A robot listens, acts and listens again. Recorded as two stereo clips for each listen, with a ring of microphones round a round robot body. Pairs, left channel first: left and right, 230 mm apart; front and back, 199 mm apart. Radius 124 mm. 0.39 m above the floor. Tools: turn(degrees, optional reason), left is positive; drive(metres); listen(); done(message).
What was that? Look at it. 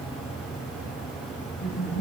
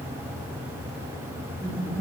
turn(degrees=70, reason="The laughter: 70° left.")
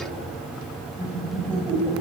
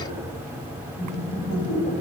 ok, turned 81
turn(degrees=-10, reason="The laughter is now 10° right.")
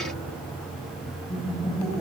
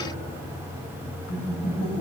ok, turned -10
done("Facing the laughter.")